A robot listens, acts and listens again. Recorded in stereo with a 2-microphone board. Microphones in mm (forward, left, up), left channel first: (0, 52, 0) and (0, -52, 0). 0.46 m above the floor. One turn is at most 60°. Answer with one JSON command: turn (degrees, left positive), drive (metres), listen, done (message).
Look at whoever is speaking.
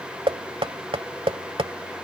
{"listen": true}
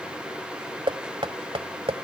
{"listen": true}
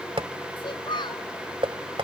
{"turn": 50}
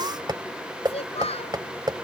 {"turn": 60}
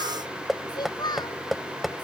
{"turn": 45}
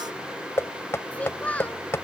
{"turn": 15}
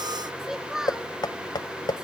{"done": "Facing the child speaking."}